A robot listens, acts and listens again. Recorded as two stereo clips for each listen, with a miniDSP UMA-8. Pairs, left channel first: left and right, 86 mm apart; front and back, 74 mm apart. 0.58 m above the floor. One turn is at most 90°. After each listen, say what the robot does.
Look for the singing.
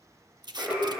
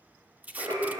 Turn 90° right.
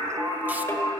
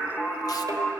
Turn 85° right.
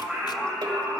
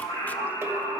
Turn 10° right.
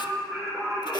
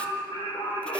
Facing the singing.